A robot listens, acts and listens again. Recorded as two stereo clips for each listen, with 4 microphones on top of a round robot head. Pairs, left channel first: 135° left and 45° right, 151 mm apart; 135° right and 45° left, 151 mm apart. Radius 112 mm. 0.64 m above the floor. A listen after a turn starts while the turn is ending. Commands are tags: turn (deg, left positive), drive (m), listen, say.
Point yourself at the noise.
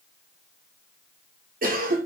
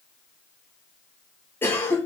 <turn deg="-60"/>
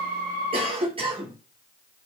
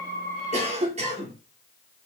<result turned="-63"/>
<say>Facing the cough, 2 to 4 m away.</say>